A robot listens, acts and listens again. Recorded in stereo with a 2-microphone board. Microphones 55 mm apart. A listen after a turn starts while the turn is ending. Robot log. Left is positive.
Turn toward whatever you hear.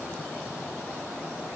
cmd idle
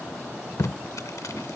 note: The tape being pulled: about 75° left or 105° left.
cmd yaw +75
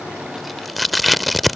end: Found it: tape being pulled, straight ahead.